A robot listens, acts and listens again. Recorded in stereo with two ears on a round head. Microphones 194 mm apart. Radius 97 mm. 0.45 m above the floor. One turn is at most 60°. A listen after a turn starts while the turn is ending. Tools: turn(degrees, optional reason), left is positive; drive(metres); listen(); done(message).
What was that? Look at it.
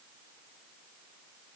listen()
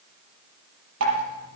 turn(degrees=-60, reason="The dripping: about 70° right or 110° right.")
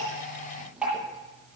done("Found it: dripping, straight ahead.")